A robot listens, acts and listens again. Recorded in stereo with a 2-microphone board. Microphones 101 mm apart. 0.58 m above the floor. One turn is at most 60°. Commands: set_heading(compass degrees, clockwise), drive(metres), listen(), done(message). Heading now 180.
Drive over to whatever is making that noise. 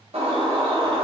set_heading(240)
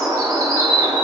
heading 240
set_heading(275)
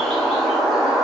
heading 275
drive(1.0)
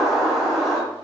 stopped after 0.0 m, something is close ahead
done("Blocked. The bird is further on, straight ahead.")